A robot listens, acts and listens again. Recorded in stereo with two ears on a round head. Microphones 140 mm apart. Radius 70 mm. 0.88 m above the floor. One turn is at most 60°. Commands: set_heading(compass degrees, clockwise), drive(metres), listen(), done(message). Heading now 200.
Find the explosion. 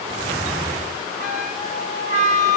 listen()
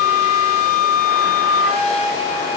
listen()
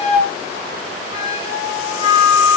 done("I can't make out an explosion to turn to.")